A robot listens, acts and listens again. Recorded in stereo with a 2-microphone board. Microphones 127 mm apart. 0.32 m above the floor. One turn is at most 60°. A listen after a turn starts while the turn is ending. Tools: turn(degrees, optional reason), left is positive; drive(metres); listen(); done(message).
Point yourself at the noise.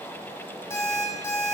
turn(degrees=20, reason="The alarm clock: about 20° left or 160° left.")
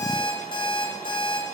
turn(degrees=60, reason="So it is at 135° left.")
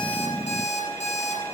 turn(degrees=60, reason="The alarm clock is now 90° left.")
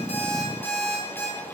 turn(degrees=15, reason="The alarm clock is now 15° left.")
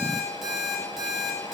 done("Facing the alarm clock.")